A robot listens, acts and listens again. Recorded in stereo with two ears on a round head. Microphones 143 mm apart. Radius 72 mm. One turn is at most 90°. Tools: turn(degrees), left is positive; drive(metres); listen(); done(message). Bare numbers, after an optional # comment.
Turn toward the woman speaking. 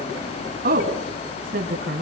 # The woman speaking: about 60° right or 120° right.
turn(-60)
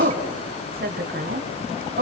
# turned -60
# So it is at 55° right.
turn(-55)
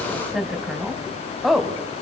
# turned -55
done("Facing the woman speaking.")